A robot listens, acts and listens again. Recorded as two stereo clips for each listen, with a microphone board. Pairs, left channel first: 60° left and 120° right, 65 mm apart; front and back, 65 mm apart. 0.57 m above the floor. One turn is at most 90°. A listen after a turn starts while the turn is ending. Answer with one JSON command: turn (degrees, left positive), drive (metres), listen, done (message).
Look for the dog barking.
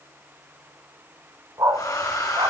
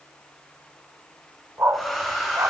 {"turn": -90}
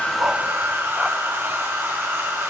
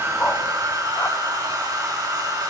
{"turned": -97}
{"turn": -35}
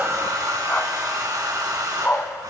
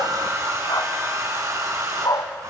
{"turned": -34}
{"done": "Facing the dog barking."}